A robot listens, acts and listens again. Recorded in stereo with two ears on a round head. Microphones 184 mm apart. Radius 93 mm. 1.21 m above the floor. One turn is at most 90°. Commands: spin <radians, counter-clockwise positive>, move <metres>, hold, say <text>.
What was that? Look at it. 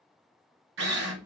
spin -1.05
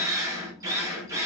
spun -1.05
spin -0.26
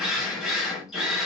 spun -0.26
say Found it: a drill, straight ahead.